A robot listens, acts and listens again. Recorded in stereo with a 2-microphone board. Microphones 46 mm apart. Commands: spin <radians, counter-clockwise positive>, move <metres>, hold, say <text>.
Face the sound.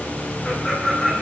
spin 0.52
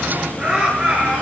spin -0.44
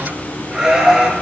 spin -0.17
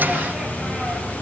hold
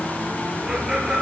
spin -0.17
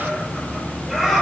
say Facing the laughter.